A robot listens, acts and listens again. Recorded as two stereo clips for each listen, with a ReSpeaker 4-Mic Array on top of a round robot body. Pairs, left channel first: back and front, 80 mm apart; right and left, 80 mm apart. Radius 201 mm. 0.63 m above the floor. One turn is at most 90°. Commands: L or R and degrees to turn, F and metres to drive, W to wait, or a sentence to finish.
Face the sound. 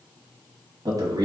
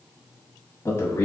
R30
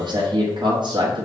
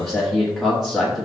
Found it: a man speaking, straight ahead.